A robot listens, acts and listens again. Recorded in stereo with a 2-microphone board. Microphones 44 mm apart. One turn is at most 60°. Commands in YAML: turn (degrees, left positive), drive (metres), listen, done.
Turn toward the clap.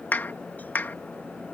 turn: 45
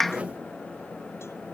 done: "Facing the clap."